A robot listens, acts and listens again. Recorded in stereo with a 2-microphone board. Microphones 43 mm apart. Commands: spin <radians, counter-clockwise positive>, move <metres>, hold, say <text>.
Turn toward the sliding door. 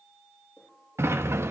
spin -1.31
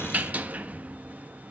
spin -0.61
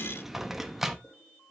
say Found it: a sliding door, straight ahead, 1 to 2 m away.